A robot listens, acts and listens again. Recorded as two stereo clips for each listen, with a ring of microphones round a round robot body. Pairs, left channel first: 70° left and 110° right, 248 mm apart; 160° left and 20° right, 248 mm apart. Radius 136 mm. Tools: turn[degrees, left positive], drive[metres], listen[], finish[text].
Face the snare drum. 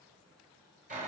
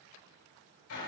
Action: listen[]
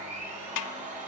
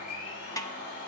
Thought: The snare drum: 80° left.
Action: turn[80]
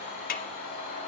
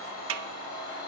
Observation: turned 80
Thought: The snare drum is now 10° left.
Action: turn[10]
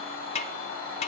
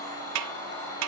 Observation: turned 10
Action: finish[Facing the snare drum.]